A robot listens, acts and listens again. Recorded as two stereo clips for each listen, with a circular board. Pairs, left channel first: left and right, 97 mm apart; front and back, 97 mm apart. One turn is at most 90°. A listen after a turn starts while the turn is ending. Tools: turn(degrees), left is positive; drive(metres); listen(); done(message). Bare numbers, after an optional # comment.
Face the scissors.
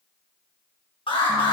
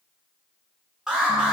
listen()
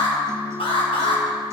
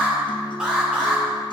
listen()
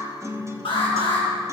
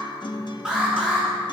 done("I can't make out scissors to turn to.")